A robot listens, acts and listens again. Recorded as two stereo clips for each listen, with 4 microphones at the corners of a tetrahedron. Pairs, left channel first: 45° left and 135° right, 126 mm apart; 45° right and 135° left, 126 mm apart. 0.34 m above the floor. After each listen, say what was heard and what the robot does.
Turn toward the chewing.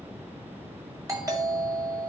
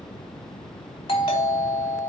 Keep listening.
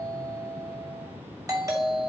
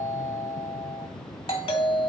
Keep listening.
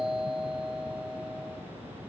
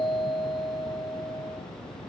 I can't make out chewing, only a doorbell.